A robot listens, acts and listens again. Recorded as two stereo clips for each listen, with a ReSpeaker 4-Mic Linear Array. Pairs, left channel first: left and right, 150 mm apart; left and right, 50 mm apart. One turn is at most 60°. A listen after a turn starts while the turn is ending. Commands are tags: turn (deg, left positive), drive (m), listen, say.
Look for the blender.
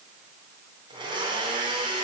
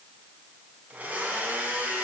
<turn deg="-35"/>
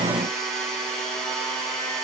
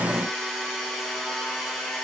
<say>Facing the blender, 2 to 4 m away.</say>